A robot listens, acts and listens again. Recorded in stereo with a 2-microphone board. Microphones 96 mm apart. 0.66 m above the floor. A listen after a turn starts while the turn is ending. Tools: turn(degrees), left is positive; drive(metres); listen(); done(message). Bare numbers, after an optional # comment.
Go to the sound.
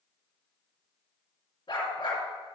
# The dog barking: about 60° left or 120° left.
turn(60)
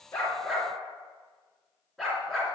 drive(1.0)
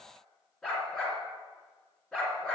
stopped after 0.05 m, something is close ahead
done("Blocked. The dog barking is further on, straight ahead.")